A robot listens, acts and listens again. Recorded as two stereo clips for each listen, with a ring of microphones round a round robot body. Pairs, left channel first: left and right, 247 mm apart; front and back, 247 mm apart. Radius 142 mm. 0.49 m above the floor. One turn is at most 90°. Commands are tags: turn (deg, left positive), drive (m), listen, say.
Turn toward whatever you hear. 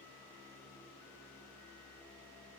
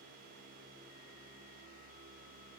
<listen/>
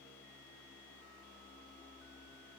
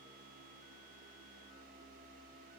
<listen/>
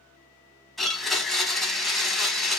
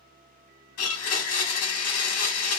<say>Found it: a blender, straight ahead.</say>